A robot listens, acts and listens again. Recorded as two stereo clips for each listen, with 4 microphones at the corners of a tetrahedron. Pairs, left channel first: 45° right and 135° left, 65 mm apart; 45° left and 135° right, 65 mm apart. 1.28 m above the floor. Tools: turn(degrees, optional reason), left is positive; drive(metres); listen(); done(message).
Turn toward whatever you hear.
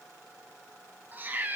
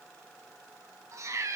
turn(degrees=-165, reason="The cat meowing: 165° right.")
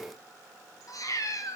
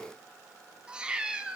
turn(degrees=-65, reason="The cat meowing is now 65° right.")
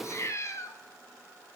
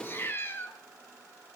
turn(degrees=-10, reason="The cat meowing is now 10° right.")
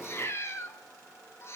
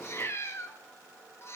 done("Facing the cat meowing, under 1 m away.")